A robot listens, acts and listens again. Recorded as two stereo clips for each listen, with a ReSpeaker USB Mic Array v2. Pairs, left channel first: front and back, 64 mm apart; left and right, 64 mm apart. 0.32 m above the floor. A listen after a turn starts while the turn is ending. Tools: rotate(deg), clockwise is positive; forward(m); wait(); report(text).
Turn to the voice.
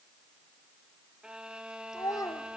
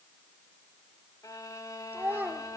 rotate(25)
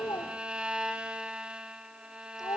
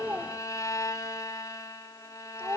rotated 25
rotate(20)
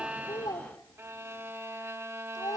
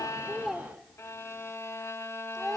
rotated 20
report("Found it: a child speaking, straight ahead.")